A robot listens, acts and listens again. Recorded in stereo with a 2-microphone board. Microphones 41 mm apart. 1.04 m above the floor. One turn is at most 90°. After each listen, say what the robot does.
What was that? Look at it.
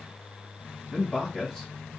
Turn 30° left.
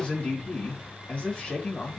Turn 90° left.
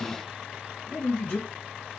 Turn 55° left.
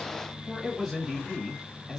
Found it: a man speaking, straight ahead, 1 to 2 m away.